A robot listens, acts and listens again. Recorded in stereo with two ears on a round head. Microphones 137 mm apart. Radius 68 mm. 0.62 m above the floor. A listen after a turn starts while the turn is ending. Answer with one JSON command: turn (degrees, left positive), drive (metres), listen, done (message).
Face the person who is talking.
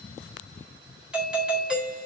{"listen": true}
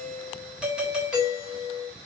{"listen": true}
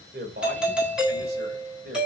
{"turn": -75}
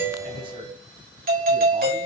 {"listen": true}
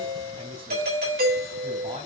{"turn": -35}
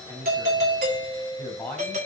{"turn": 10}
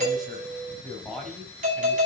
{"done": "Facing the man speaking."}